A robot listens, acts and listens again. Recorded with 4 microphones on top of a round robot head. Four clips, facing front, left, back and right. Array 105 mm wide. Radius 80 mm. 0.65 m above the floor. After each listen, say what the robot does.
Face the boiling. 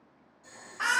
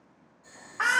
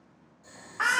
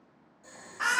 Turn 115° right.
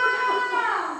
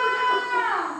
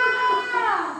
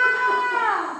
Keep listening.
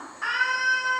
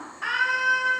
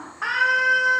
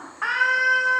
Facing the boiling, 1 to 2 m away.